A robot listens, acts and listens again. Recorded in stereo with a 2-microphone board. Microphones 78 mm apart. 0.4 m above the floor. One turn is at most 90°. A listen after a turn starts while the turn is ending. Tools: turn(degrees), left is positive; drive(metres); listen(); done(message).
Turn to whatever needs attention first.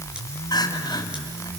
turn(degrees=60)
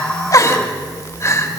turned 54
turn(degrees=50)
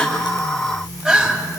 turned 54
done("Found it: crying, straight ahead, 2 to 4 m away.")